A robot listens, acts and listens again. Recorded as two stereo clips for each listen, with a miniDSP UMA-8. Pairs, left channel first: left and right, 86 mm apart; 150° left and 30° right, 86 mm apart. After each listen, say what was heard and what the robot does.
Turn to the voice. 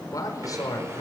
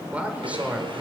The man speaking: 45° left. Turn 45° left.
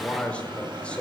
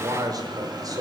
The man speaking is now 15° left. Turn 15° left.
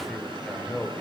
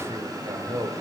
Facing the man speaking, over 4 m away.